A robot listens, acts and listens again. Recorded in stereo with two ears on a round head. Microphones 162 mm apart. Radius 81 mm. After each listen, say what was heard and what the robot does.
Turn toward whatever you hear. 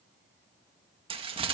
The crumpling: about 30° right or 150° right. Turn 30° right.
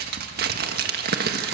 So it is at 120° right. Turn 120° right.
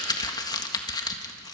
The crumpling is now 25° left. Turn 25° left.
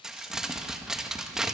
Found it: crumpling, straight ahead.